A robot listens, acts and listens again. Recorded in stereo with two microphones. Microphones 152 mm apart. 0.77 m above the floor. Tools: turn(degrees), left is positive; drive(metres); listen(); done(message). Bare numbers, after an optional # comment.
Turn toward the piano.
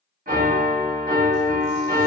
# The piano: about 75° right or 105° right.
turn(-75)
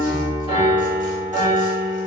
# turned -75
# So it is at 20° right.
turn(-20)
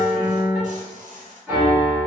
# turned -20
# The piano is now 10° right.
turn(-10)
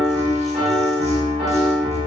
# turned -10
done("Facing the piano.")